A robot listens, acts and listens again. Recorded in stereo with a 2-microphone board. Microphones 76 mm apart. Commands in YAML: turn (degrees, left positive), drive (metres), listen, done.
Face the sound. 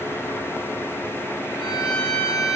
turn: 70
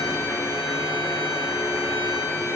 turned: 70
listen: true
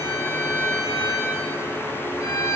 turn: 35
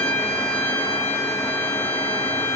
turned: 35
turn: 10
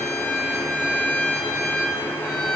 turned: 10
done: "Found it: a violin, straight ahead, 2 to 4 m away."